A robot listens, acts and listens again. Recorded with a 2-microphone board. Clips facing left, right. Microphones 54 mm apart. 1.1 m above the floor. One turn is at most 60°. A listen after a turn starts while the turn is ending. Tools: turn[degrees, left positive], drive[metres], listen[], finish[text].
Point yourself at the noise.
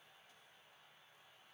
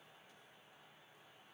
Action: listen[]
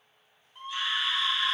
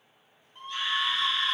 Action: turn[30]
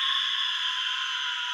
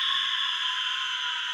Thought: So it is at 20° right.
Action: turn[-20]
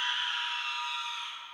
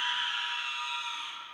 Action: finish[Found it: a scream, straight ahead, under 1 m away.]